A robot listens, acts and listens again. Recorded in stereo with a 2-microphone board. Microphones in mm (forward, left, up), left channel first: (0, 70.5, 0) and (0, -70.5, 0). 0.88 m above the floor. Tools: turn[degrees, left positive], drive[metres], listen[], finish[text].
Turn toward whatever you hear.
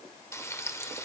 Thought: The frying: about 20° left or 160° left.
Action: turn[20]
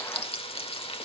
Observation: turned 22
Thought: So it is at 140° left.
Action: turn[140]
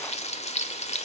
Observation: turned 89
Thought: The frying is now 50° left.
Action: turn[50]
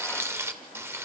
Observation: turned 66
Thought: The frying is now 20° right.
Action: turn[-20]
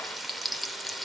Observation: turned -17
Action: finish[Facing the frying, 1 to 2 m away.]